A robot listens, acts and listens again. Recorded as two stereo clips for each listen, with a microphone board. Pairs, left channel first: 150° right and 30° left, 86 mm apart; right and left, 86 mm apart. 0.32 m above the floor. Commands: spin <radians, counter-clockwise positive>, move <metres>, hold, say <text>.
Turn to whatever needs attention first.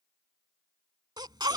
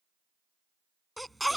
say Found it: a baby crying, straight ahead.